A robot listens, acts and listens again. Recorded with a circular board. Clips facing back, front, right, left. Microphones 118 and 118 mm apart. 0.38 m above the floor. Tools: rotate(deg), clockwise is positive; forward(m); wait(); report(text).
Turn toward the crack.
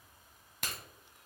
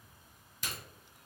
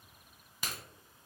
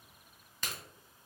rotate(170)
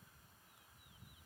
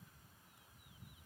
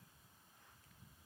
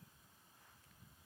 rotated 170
report("I heard a crack from this way, but can't make it out now.")